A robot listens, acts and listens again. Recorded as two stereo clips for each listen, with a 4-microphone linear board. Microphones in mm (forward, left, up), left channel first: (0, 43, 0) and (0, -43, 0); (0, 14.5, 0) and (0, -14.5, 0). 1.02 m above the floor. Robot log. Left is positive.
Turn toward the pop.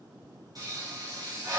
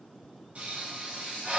note: The pop: about 50° right or 130° right.
cmd yaw -50
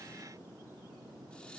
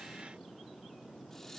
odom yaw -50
cmd idle
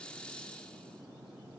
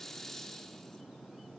end: I heard a pop, but can't make it out now. It was about straight ahead or 80° right.